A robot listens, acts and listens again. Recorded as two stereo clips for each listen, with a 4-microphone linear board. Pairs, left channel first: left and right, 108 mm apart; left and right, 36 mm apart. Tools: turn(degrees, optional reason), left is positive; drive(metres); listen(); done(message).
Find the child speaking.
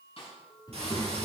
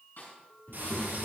turn(degrees=40, reason="The child speaking: about 40° left or 140° left.")
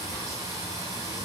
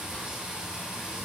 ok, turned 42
listen()
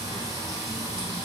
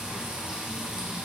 listen()
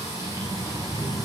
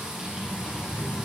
turn(degrees=130, reason="So it is at 130° left.")
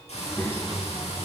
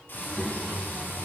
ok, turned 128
turn(degrees=30, reason="The child speaking is now 30° left.")
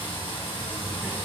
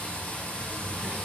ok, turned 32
done("Facing the child speaking, 2 to 4 m away.")